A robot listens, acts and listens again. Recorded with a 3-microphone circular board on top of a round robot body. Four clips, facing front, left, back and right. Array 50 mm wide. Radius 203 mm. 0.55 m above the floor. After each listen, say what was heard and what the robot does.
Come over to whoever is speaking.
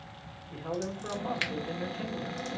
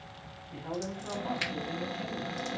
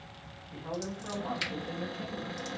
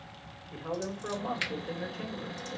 The man speaking: 50° right. Turn 50° right.
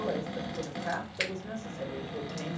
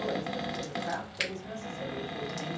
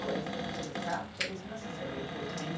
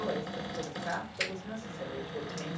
The man speaking is now 10° right. Turn 10° right.
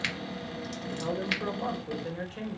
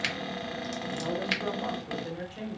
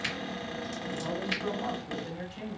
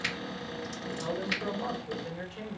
Drive 1.0 m forward.
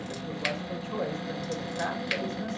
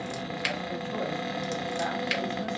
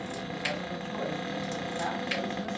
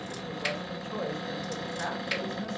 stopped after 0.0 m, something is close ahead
Something is in my way. I am facing the man speaking but have not reached it.